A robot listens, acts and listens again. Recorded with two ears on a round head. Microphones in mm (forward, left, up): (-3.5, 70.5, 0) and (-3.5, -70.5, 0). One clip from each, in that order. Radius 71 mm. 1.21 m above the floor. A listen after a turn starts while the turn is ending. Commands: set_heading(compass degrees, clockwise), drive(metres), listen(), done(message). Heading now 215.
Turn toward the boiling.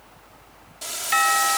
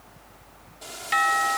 set_heading(165)
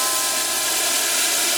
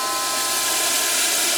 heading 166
done("Found it: boiling, straight ahead.")